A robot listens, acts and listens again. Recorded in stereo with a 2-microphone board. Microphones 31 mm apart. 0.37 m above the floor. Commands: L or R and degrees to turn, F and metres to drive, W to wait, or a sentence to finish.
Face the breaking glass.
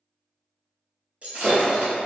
R45
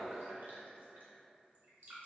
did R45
W
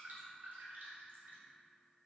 I heard breaking glass, but can't make it out now. It was about straight ahead or 90° right.